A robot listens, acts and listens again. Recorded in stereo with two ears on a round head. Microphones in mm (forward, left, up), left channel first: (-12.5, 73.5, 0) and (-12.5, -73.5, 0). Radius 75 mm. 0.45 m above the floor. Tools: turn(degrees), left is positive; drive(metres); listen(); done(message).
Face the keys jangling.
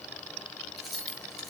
turn(degrees=30)
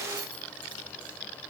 listen()
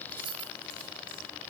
turn(degrees=-30)
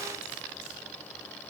listen()
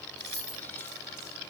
turn(degrees=15)
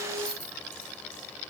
done("Facing the keys jangling.")